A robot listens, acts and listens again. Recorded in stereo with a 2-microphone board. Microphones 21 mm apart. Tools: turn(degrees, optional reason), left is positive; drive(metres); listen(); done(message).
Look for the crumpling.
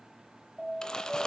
turn(degrees=35, reason="The crumpling: about 35° left or 145° left.")
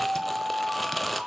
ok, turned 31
done("Facing the crumpling, under 1 m away.")